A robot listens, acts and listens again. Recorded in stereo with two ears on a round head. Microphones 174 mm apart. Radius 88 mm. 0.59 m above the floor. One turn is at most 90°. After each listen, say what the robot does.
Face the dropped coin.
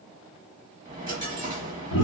Turn 20° right.
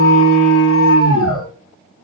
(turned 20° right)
Keep listening.
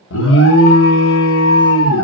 I heard a dropped coin, but can't make it out now. It was about straight ahead or 140° right.